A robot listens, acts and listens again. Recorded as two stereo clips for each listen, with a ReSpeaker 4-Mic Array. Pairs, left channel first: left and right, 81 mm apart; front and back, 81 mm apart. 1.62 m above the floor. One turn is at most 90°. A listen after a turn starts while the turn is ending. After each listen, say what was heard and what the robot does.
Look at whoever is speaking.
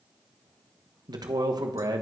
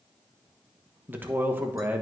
The man speaking: 115° right. Turn 90° right.
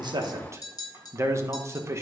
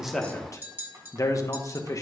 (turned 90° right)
The man speaking is now 40° right. Turn 40° right.
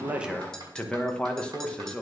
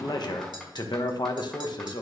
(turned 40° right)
The man speaking is now 15° left. Turn 15° left.
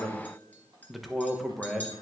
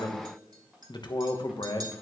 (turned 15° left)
Facing the man speaking.